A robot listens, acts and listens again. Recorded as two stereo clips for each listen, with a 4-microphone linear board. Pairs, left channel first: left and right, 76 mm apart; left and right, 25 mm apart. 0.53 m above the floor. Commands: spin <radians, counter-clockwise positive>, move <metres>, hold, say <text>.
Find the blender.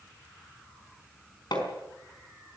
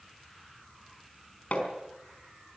hold
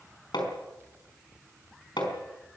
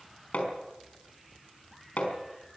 hold
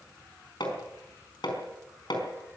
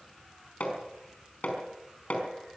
say I can't make out a blender to turn to.